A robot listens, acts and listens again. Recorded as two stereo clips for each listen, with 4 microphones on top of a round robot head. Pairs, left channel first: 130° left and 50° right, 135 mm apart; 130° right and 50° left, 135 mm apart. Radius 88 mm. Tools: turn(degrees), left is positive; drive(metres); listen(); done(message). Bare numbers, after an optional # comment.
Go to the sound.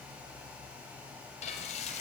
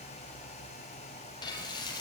# The frying: 170° left.
turn(170)
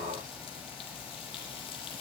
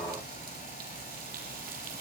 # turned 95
# The frying is now 75° left.
turn(75)
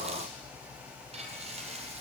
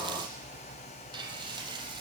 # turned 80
drive(1.0)
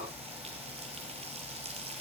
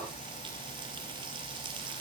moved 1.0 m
drive(1.0)
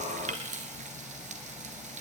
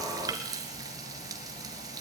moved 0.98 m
# The frying is now 15° right.
turn(-15)
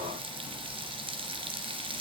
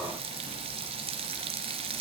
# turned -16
drive(1.0)
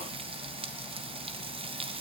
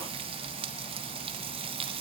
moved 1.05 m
drive(1.0)
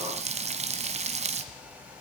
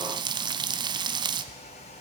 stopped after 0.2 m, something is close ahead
# The frying is now 10° right.
turn(-10)
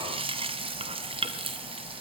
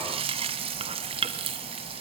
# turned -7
done("I am next to the frying.")